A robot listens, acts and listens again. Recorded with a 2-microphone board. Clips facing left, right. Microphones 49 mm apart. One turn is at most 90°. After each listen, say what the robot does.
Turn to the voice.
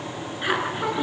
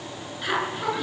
Turn 20° left.
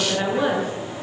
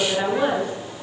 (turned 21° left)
Facing the woman speaking, over 4 m away.